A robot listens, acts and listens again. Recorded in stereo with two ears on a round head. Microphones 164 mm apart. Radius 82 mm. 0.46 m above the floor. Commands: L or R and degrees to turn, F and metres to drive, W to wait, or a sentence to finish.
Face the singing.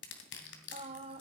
R30
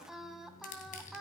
Found it: singing, straight ahead, 1 to 2 m away.